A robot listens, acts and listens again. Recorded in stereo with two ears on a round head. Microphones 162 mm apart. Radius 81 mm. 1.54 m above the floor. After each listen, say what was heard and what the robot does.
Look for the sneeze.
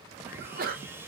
The sneeze: about 50° right or 130° right. Turn 50° right.
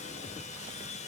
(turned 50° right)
Keep listening.
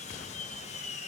I heard a sneeze, but can't make it out now. It was about straight ahead or 80° right.